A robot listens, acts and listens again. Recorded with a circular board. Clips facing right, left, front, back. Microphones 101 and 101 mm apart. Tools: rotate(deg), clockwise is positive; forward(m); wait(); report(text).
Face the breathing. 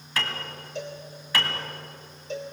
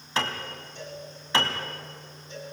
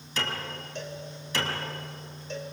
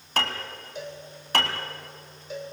wait()
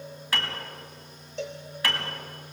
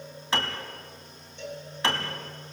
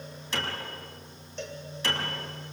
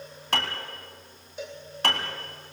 wait()
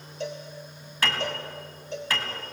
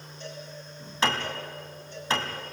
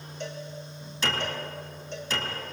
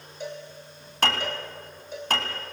report("I can't make out breathing, only a cowbell and a piano.")